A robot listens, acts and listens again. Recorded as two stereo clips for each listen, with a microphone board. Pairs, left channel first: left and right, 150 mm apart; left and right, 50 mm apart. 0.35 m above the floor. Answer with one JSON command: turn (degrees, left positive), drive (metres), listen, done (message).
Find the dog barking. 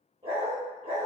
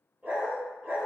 {"turn": -45}
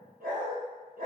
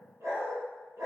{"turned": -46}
{"turn": -75}
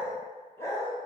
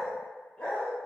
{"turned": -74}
{"turn": 20}
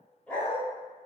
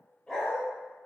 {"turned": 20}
{"turn": 15}
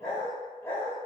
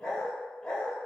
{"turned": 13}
{"turn": 15}
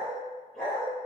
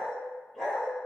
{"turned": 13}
{"done": "Found it: a dog barking, straight ahead, 1 to 2 m away."}